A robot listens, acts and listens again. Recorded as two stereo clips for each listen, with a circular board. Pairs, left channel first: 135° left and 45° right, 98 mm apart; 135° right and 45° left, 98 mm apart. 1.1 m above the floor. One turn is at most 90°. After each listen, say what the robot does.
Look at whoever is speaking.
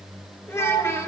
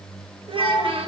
Turn 70° left.
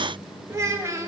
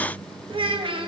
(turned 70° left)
Turn 15° left.
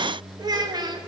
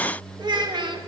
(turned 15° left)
Facing the child speaking, under 1 m away.